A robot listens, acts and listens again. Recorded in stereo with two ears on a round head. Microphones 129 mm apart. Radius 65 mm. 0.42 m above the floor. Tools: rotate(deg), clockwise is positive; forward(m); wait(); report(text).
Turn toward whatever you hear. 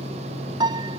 rotate(30)
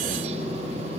wait()
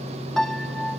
report("Facing the piano.")